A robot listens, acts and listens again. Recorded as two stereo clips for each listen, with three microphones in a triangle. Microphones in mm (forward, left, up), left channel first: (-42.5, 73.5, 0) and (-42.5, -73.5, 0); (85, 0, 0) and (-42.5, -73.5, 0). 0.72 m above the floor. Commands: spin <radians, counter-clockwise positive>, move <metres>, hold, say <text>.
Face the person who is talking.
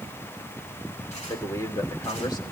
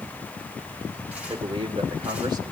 spin 2.62
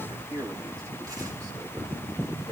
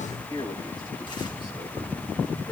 spin -0.44
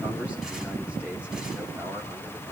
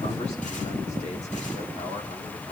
hold
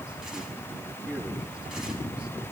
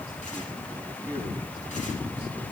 hold
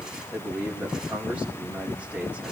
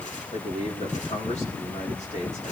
spin -0.17
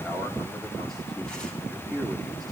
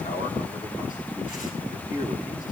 say Found it: a man speaking, straight ahead.